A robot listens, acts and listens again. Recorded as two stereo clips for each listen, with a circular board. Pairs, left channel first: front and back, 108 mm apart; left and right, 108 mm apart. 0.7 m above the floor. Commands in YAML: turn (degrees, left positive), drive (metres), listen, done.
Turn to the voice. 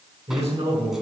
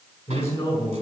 turn: 155
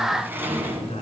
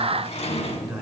done: "Found it: a man speaking, straight ahead."